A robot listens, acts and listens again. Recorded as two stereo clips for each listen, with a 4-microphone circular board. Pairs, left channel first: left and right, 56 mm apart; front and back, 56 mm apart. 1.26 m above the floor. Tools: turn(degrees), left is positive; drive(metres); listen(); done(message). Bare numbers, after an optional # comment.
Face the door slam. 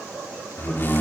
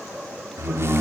# The door slam: 140° left.
turn(140)
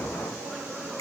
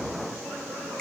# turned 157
# Nothing new. It was at 15° right.
turn(-15)
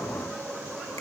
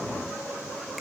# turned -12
done("I heard a door slam from this way, but can't make it out now.")